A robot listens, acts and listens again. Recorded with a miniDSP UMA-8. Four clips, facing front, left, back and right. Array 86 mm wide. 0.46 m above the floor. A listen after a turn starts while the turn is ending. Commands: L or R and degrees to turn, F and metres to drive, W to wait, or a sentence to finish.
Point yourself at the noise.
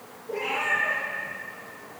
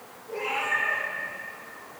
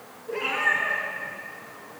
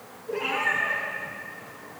R150
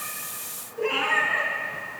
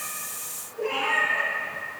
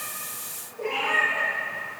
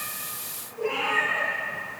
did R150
Facing the cat meowing.